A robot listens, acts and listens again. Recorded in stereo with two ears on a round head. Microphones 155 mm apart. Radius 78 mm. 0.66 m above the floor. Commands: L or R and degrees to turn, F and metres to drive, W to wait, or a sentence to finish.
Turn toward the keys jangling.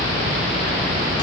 W
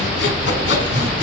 W
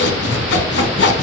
I can't make out keys jangling to turn to.